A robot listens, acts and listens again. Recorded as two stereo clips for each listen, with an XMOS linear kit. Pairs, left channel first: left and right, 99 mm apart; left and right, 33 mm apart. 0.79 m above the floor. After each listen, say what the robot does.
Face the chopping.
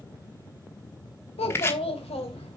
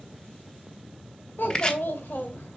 Turn 25° left.
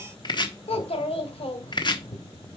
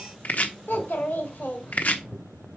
Turn 130° left.
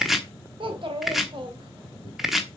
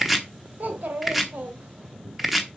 Found it: chopping, straight ahead, 1 to 2 m away.